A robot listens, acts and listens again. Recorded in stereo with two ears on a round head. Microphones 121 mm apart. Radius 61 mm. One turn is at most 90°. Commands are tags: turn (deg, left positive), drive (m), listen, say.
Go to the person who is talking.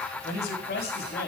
<turn deg="90"/>
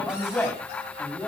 <drive m="1.0"/>
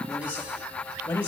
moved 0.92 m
<turn deg="10"/>
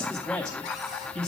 <drive m="1.0"/>
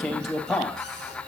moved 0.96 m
<drive m="1.0"/>
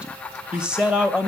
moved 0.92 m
<turn deg="-10"/>
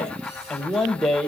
<drive m="1.0"/>
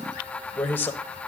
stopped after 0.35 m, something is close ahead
<turn deg="15"/>
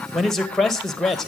<say>I am next to the man speaking.</say>